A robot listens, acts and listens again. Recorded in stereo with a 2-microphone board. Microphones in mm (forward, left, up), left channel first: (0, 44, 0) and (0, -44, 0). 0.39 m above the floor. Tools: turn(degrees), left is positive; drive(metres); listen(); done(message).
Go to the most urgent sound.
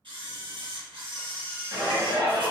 turn(degrees=-35)
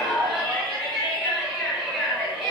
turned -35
turn(degrees=-10)
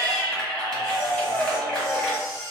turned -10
drive(metres=1.0)
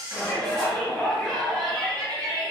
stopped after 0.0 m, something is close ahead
done("Blocked. The shout is further on, straight ahead.")